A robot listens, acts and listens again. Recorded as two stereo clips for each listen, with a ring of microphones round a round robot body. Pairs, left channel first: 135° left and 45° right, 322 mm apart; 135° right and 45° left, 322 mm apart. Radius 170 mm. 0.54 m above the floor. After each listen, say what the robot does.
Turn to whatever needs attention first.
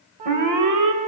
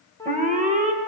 Turn 20° right.
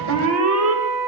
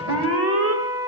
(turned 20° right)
Facing the alarm, 2 to 4 m away.